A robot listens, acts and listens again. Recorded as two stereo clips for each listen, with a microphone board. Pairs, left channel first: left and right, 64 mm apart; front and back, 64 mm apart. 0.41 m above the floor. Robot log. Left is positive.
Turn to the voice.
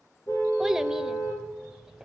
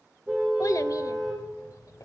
note: The child speaking: 10° right.
cmd yaw -10
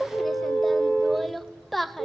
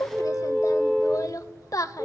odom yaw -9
end: Found it: a child speaking, straight ahead, under 1 m away.